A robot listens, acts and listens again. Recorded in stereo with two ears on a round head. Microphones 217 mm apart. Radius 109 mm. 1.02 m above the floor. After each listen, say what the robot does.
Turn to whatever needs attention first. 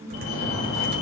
Turn 70° left.
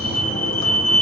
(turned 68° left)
Found it: a fire alarm, straight ahead, over 4 m away.